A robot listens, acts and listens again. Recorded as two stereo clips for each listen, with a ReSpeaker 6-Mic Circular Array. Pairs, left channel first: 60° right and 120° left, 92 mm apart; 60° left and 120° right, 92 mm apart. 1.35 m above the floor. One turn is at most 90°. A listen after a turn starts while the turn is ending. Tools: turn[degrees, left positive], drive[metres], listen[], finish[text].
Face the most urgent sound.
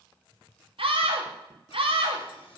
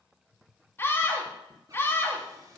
Thought: The scream: 125° left.
Action: turn[90]
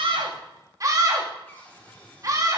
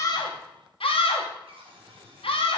Thought: The scream is now 70° left.
Action: turn[70]
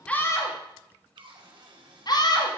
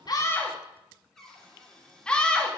Thought: The scream is now 20° right.
Action: turn[-20]
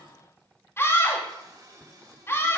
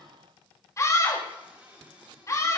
Action: finish[Found it: a scream, straight ahead, 2 to 4 m away.]